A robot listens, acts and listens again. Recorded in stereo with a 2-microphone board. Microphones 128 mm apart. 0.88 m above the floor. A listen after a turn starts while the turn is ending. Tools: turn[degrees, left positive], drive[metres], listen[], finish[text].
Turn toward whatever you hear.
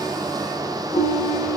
Thought: The ringtone: about 75° left or 105° left.
Action: turn[75]
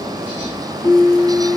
Thought: So it is at 30° left.
Action: turn[30]
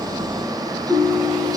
Action: finish[Found it: a ringtone, straight ahead, 2 to 4 m away.]